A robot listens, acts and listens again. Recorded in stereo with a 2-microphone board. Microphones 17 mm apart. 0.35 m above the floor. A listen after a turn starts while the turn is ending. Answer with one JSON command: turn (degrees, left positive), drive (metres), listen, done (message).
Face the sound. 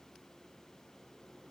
{"listen": true}
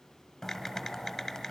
{"turn": 20}
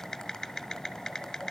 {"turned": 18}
{"turn": 145}
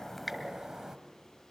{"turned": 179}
{"turn": -40}
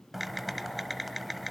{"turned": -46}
{"done": "Found it: typing on a keyboard, straight ahead."}